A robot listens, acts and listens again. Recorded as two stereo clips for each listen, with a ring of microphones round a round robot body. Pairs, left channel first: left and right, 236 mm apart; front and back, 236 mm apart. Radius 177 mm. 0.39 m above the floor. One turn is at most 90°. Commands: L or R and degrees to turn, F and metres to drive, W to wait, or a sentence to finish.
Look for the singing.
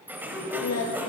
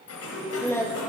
L80
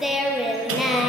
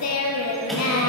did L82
Found it: singing, straight ahead.